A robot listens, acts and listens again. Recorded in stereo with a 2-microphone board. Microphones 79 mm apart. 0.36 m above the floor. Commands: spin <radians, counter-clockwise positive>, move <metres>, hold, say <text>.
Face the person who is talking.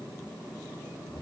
hold
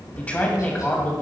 spin 0.35
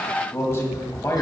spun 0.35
spin 2.36
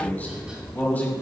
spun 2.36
spin 0.44
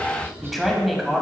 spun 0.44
say Facing the man speaking.